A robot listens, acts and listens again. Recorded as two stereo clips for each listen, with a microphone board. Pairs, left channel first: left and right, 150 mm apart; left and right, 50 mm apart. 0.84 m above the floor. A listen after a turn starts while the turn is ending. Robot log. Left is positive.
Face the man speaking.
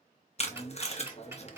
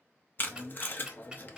note: The man speaking: about 55° left or 125° left.
cmd yaw +55
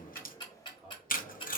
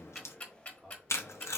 cmd idle
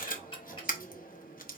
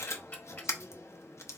cmd idle
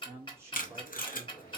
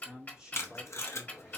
note: So it is at 20° right.
cmd yaw -20
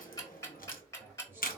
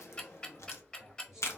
cmd idle
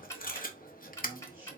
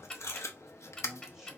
cmd idle
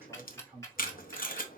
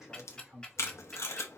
note: The man speaking is now 15° right.
cmd yaw -15
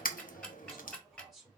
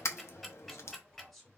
end: Facing the man speaking.